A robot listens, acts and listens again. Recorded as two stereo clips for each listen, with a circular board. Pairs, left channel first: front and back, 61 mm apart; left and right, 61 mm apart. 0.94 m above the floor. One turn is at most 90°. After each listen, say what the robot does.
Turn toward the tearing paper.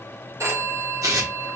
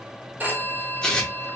Turn 90° left.
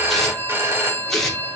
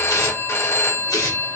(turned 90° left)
Turn 85° left.
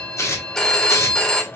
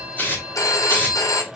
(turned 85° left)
Turn 35° left.
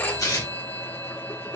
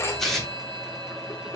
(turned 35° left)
Found it: tearing paper, straight ahead, 2 to 4 m away.